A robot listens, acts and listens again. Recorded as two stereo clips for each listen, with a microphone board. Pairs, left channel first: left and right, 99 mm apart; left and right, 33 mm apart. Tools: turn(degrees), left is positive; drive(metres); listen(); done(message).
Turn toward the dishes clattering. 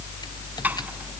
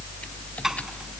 turn(degrees=-15)
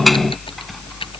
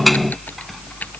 done("Facing the dishes clattering.")